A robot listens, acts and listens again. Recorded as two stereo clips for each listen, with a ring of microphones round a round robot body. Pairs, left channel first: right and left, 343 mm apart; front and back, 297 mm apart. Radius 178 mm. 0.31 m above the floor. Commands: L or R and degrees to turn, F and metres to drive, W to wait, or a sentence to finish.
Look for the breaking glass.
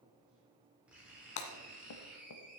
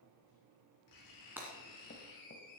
R95
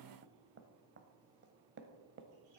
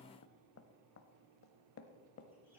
I heard breaking glass from this way, but can't make it out now.